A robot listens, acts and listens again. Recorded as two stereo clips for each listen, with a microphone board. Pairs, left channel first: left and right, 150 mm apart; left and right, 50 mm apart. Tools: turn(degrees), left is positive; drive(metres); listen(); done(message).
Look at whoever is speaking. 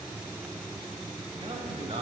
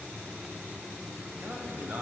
turn(degrees=-40)
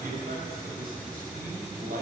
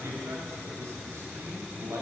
turn(degrees=-105)
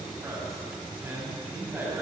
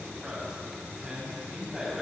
turn(degrees=-15)
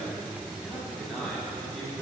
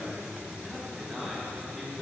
done("Facing the man speaking.")